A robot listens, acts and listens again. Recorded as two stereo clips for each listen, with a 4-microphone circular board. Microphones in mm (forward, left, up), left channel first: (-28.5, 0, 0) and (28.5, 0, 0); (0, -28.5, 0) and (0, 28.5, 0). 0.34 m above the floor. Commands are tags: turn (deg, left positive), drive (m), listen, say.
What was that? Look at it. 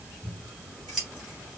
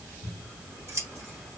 <turn deg="85"/>
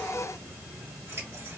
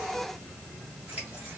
<turn deg="20"/>
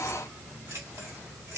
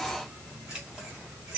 <say>Facing the scissors, 2 to 4 m away.</say>